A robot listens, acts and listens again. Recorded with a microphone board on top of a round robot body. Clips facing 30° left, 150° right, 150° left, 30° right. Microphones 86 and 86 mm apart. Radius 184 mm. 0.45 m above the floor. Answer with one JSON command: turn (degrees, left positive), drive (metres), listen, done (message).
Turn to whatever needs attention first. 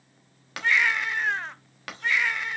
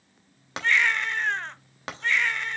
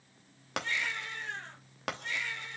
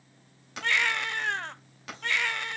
{"turn": -55}
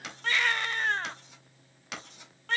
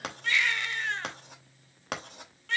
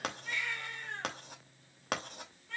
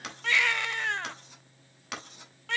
{"turn": -20}
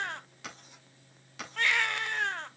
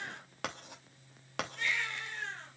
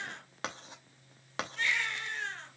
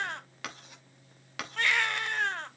{"done": "Facing the baby crying."}